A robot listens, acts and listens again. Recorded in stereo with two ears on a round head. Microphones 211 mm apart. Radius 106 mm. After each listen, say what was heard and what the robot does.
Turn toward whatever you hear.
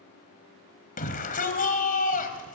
The shout: about 35° left or 145° left. Turn 35° left.
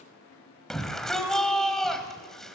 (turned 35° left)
Found it: a shout, straight ahead.